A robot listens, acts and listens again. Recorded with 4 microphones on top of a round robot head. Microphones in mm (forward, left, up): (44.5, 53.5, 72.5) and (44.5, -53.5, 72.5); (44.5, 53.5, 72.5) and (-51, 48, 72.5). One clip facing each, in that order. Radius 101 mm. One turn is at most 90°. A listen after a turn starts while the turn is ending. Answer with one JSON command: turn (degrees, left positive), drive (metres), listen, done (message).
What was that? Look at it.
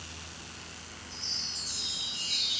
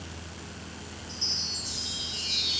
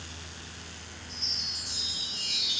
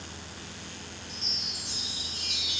{"turn": -90}
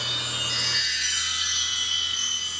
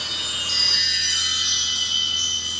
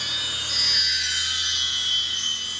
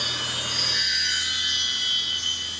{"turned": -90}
{"turn": -30}
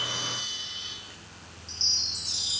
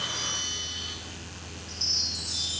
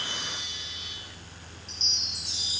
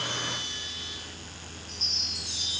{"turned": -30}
{"turn": 25}
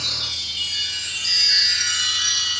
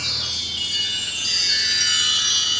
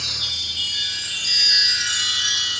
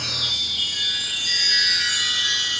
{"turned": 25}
{"turn": -15}
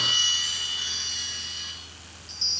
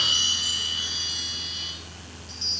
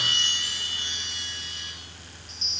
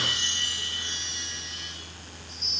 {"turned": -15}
{"done": "Found it: a chime, straight ahead, 2 to 4 m away."}